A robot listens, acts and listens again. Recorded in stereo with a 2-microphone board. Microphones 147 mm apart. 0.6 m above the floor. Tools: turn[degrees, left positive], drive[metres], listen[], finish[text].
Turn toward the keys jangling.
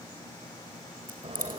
Action: turn[-90]
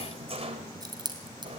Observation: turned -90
Thought: So it is at 30° right.
Action: turn[-30]
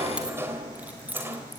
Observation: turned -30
Thought: The keys jangling is now 10° right.
Action: turn[-10]
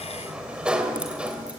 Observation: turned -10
Action: listen[]
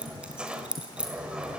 Action: finish[Found it: keys jangling, straight ahead.]